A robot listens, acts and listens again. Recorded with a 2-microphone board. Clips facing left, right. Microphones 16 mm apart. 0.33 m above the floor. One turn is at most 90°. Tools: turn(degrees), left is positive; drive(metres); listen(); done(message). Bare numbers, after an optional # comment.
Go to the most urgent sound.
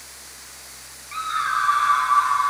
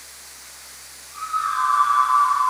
# The scream: about 65° left or 115° left.
turn(65)
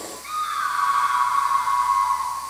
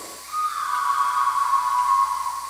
# So it is at 45° left.
turn(45)
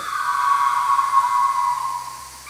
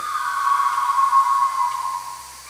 # The scream is now 20° left.
turn(20)
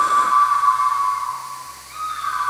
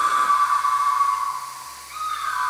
drive(1.0)
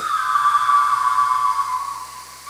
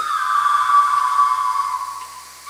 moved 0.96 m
drive(1.0)
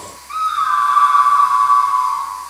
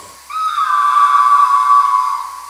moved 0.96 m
# The scream is now 15° right.
turn(-15)
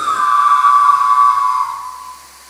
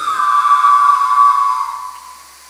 drive(1.0)
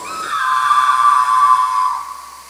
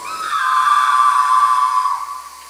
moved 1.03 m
drive(1.0)
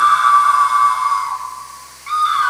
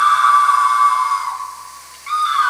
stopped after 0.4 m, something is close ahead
done("I am next to the scream.")